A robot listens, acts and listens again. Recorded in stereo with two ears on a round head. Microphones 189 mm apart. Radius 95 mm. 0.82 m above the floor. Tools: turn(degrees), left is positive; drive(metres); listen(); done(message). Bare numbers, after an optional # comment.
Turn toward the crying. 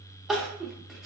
turn(-30)
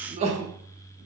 # So it is at 150° right.
turn(-150)
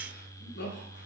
# The crying is now 55° left.
turn(55)
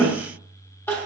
# The crying is now 10° left.
turn(10)
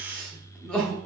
done("Found it: crying, straight ahead.")